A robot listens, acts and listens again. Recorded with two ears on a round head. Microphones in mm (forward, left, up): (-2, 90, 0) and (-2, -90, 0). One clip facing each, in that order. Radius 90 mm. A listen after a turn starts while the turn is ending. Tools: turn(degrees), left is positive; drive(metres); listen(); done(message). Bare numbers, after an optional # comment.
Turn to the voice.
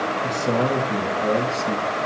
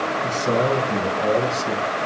turn(30)
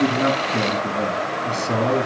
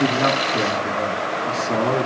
# So it is at 145° left.
turn(145)
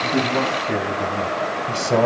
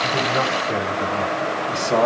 # The man speaking is now 20° left.
turn(20)
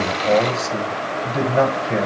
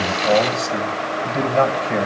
done("Found it: a man speaking, straight ahead, 2 to 4 m away.")